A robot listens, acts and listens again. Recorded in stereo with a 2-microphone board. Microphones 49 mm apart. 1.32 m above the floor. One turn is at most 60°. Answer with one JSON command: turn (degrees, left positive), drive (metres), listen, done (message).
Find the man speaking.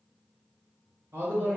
{"turn": -45}
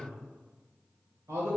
{"turn": -60}
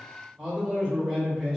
{"turn": -15}
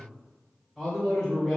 {"done": "Facing the man speaking, 1 to 2 m away."}